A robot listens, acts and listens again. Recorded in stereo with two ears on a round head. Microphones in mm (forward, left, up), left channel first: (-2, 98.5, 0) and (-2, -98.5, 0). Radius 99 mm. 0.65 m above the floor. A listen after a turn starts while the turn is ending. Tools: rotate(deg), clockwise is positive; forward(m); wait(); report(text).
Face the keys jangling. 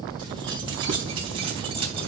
rotate(25)
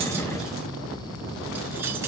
wait()
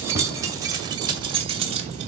rotate(30)
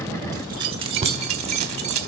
rotate(30)
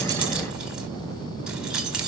report("Found it: keys jangling, straight ahead.")